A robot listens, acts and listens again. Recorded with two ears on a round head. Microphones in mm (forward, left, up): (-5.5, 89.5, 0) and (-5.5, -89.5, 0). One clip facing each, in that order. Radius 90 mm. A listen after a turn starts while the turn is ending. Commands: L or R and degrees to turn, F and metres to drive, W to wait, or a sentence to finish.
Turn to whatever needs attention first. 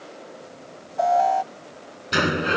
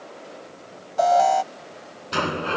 R60
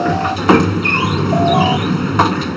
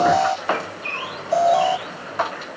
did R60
W
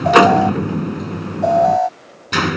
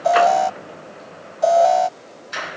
R50
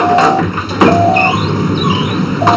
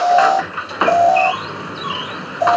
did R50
W
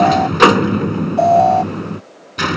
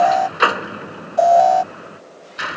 R15
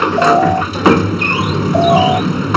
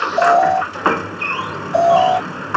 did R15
W
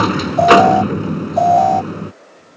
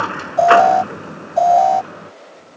Found it: an alarm, straight ahead.